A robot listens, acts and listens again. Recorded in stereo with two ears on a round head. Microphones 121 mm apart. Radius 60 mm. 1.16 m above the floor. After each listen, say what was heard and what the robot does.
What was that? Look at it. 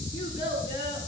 The child speaking: about 40° left or 140° left. Turn 40° left.
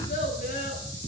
So it is at 95° left. Turn 95° left.
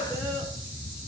Keep listening.
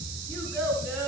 The child speaking is now 20° left. Turn 20° left.
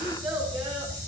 The child speaking is now 10° right. Turn 10° right.
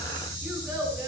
Found it: a child speaking, straight ahead.